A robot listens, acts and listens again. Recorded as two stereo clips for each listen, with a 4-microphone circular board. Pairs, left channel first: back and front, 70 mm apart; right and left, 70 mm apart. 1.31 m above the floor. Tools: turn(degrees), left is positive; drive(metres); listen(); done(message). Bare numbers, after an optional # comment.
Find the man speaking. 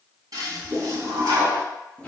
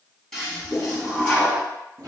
listen()
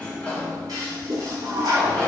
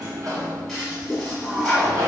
listen()
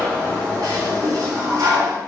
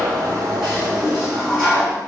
done("I can't make out a man speaking to turn to.")